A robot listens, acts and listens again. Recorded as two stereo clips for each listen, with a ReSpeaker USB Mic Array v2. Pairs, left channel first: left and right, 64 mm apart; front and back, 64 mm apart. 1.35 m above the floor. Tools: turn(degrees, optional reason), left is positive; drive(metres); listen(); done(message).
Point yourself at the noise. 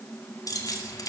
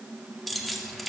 turn(degrees=90, reason="The keys jangling: 90° left.")
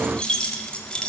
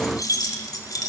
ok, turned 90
turn(degrees=15, reason="The keys jangling is now 15° left.")
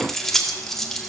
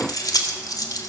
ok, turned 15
done("Found it: keys jangling, straight ahead.")